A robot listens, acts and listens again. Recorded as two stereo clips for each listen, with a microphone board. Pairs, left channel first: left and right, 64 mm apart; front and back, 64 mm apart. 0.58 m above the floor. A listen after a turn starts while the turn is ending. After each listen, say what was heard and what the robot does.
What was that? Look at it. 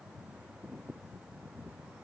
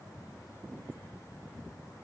Keep listening.
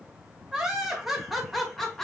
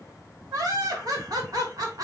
The laughter: 175° left. Turn 175° left.
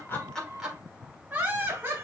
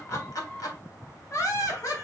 The laughter is now 30° right. Turn 30° right.
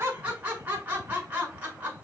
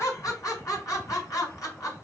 The laughter is now 25° right. Turn 25° right.
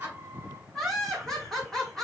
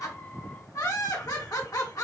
The laughter is now 10° left. Turn 10° left.
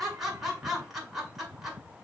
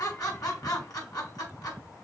Found it: laughter, straight ahead.